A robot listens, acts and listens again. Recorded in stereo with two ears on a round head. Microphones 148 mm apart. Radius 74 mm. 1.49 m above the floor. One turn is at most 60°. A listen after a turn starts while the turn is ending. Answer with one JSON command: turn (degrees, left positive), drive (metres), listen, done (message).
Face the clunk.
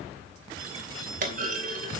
{"turn": -55}
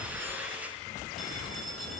{"listen": true}
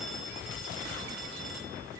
{"done": "I heard a clunk, but can't make it out now. It was about straight ahead or 70° right."}